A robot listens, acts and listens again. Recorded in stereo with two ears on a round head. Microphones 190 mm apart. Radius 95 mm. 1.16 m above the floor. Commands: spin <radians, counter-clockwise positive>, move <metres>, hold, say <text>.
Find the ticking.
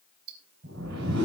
spin -1.31
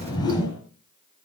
hold
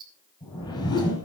spin -0.44
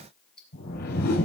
say Facing the ticking, 2 to 4 m away.